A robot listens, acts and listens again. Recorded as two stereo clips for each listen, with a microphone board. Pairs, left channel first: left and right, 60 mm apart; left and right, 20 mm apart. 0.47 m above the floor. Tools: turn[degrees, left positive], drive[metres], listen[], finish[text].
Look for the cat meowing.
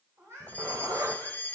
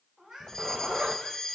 Thought: The cat meowing: about 60° right or 120° right.
Action: turn[-60]
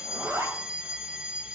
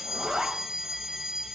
Action: listen[]
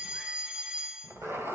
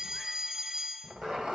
Action: listen[]
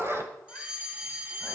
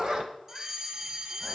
Action: finish[I heard a cat meowing, but can't make it out now. It was about straight ahead or 60° right.]